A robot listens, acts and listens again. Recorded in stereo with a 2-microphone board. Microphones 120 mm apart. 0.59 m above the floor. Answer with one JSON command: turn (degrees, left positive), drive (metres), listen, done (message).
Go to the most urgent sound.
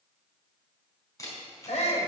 {"turn": 70}
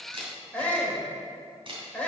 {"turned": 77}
{"turn": 10}
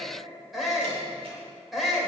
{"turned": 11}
{"drive": 1.0}
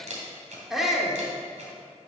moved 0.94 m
{"drive": 1.0}
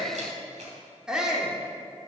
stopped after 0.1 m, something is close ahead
{"done": "Arrived at the shout, straight ahead."}